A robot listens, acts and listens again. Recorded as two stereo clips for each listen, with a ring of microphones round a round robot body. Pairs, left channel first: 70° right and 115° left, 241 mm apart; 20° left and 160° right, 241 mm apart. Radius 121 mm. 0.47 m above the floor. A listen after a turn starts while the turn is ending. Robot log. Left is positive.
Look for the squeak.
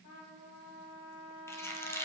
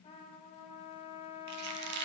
note: The squeak: 145° right.
cmd yaw -145
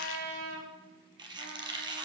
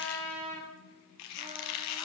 note: The squeak is now 40° left.
cmd yaw +40
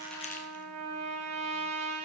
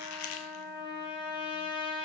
cmd idle
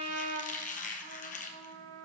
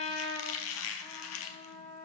note: The squeak is now 10° right.
cmd yaw -10
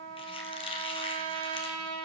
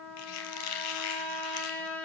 end: Found it: a squeak, straight ahead.